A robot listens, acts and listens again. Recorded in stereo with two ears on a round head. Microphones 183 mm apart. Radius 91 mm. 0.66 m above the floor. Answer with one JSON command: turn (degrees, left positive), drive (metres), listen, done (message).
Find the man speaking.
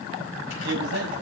{"turn": -75}
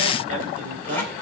{"turn": -40}
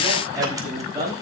{"turn": -20}
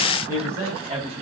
{"turn": -15}
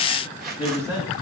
{"done": "Facing the man speaking, 2 to 4 m away."}